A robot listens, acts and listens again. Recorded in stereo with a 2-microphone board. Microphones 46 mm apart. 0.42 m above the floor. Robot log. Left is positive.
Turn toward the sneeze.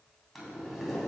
cmd idle
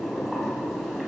cmd idle
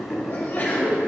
note: The sneeze: about 45° left or 135° left.
cmd yaw +45
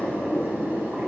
cmd idle
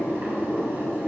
end: I heard a sneeze, but can't make it out now. It was about straight ahead or 90° left.